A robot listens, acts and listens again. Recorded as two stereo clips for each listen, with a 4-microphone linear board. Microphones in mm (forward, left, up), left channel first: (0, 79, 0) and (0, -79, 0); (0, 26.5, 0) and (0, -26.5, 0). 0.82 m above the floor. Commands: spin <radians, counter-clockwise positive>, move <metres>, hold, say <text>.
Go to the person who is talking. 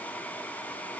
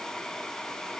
hold
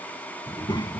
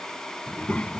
spin 0.52
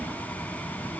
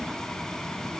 move 1.0
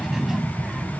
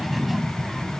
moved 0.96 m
move 1.0
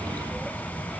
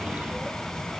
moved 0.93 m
move 1.0
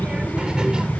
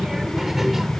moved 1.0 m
move 1.0
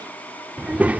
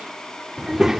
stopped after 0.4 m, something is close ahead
spin -0.17
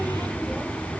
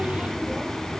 say Arrived at the child speaking, straight ahead.